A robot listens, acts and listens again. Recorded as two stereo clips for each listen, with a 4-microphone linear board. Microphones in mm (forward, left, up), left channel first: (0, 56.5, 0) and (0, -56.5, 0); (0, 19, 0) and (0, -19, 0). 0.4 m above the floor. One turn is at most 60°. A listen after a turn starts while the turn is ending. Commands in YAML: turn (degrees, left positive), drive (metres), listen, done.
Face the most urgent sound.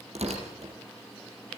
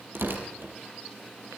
listen: true
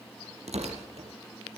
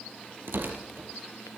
listen: true
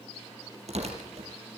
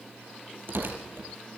done: "I can't make out anything urgent, only tearing paper."